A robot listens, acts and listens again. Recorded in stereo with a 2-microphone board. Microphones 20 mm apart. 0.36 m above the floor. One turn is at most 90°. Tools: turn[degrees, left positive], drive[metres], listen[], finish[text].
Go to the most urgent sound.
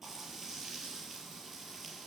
Action: listen[]
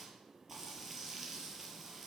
Action: listen[]
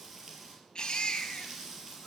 Thought: The baby crying: about 50° left or 130° left.
Action: turn[50]
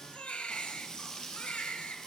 Thought: So it is at 85° left.
Action: turn[85]
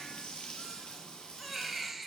Thought: The baby crying is now 10° right.
Action: turn[-10]
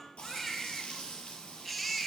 Action: drive[1.0]
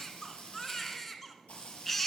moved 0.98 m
Thought: The baby crying is now 10° left.
Action: turn[10]
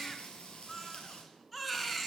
Action: drive[1.0]
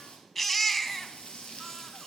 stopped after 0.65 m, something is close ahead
Thought: The baby crying is now 10° left.
Action: turn[10]
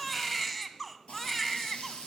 Action: finish[Arrived at the baby crying, straight ahead.]